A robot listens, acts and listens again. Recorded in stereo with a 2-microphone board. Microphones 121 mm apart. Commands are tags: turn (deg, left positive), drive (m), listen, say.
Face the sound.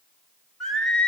<turn deg="30"/>
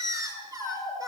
<turn deg="-30"/>
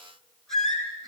<say>Facing the singing.</say>